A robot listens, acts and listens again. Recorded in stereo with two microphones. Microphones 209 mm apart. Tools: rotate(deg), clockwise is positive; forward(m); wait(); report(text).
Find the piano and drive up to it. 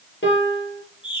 rotate(-65)
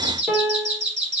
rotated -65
forward(1.0)
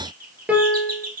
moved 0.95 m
forward(1.0)
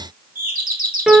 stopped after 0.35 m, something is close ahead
report("I am next to the piano.")